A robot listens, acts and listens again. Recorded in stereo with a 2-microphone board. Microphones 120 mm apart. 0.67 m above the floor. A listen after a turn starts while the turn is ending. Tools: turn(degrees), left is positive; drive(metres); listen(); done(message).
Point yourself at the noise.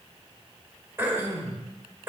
turn(degrees=-20)
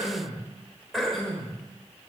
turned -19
done("Found it: throat clearing, straight ahead.")